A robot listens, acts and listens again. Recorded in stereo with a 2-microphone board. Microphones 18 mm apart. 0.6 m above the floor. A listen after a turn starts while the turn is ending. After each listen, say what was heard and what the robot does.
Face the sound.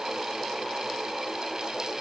Keep listening.
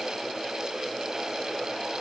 Keep listening.
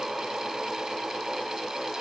I can't make out anything to turn to.